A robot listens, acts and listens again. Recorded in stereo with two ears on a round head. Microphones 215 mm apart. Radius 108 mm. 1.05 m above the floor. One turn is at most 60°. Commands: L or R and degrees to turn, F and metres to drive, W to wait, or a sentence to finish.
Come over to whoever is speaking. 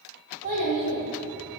R40
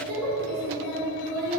R60
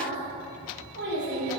R50
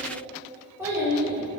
R10
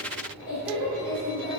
F1.0
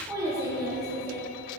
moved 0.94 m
R15
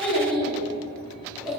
F1.0
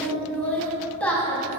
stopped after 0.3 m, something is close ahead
I am next to the child speaking.